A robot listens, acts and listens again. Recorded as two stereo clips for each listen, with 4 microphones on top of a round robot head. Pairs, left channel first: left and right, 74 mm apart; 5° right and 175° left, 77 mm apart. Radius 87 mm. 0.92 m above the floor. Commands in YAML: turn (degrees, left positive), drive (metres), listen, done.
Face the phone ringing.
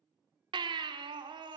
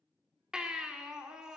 listen: true
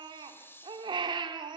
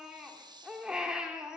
listen: true
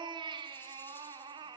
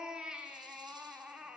done: "I can't make out a phone ringing to turn to."